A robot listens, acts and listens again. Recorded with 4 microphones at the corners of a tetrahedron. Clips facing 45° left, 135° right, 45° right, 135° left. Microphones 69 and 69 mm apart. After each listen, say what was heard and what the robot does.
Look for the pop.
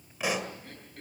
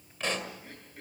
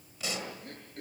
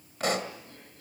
The pop: 125° left. Turn 125° left.
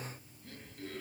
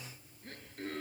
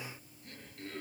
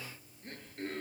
Facing where the pop came from. I can't hear it now.